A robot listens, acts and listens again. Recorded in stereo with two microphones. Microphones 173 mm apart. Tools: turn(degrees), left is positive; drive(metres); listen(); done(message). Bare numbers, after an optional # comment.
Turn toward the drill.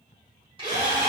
# The drill: about 30° right or 150° right.
turn(-30)
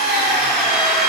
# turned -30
done("Facing the drill.")